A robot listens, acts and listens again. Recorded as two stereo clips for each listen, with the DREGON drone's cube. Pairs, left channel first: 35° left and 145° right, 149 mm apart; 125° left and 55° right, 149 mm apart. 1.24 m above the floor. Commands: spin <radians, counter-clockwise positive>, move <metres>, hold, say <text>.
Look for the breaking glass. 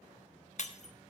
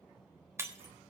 spin 0.26
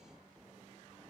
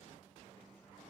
say Facing where the breaking glass came from. I can't hear it now.